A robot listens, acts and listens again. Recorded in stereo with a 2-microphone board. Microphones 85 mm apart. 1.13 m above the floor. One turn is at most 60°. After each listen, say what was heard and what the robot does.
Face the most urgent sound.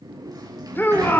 The shout: about 25° left or 155° left. Turn 25° left.
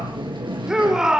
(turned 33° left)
So it is at 10° right. Turn 10° right.
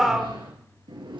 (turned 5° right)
Facing the shout, 2 to 4 m away.